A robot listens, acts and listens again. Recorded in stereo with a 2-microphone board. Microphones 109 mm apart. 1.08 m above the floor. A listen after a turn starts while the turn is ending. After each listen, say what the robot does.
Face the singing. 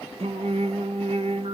Turn 65° right.
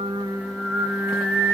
Facing the singing, under 1 m away.